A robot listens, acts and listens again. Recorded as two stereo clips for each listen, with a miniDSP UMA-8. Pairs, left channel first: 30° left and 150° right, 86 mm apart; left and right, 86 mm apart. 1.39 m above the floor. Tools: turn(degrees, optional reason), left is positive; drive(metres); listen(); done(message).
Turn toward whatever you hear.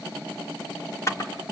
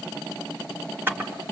turn(degrees=-25, reason="The camera shutter: 25° right.")
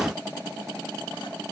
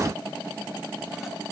listen()
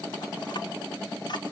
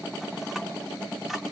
done("Facing the camera shutter, 2 to 4 m away.")